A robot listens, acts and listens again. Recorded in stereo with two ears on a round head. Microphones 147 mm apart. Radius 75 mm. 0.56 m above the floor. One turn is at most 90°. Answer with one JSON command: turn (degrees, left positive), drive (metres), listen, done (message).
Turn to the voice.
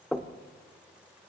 {"listen": true}
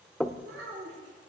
{"turn": -70}
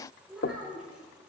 {"done": "Facing the child speaking."}